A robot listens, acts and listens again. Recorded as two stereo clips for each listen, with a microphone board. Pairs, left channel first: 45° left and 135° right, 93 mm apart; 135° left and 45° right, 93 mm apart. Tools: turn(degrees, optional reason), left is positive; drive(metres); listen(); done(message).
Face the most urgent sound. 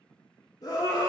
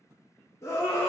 turn(degrees=85, reason="The scream: 85° left.")
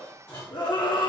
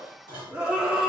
turn(degrees=35, reason="The scream is now 35° left.")
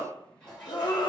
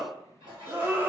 turn(degrees=20, reason="The scream is now 20° left.")
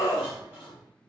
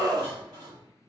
done("Facing the scream.")